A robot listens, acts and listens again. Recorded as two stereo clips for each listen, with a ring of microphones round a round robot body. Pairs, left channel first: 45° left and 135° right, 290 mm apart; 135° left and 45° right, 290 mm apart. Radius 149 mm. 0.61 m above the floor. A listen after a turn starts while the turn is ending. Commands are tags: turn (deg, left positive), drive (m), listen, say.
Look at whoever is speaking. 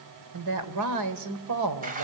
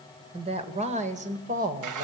<turn deg="-105"/>
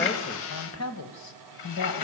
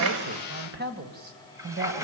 <turn deg="15"/>
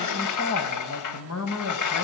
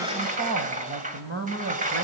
<turn deg="10"/>
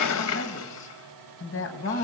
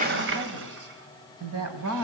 <say>Found it: a woman speaking, straight ahead, over 4 m away.</say>